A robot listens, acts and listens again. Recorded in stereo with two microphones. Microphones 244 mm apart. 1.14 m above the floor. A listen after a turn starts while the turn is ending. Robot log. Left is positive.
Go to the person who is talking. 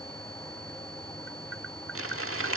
cmd idle
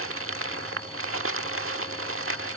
cmd idle
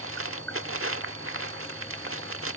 end: I can't make out anyone speaking to turn to.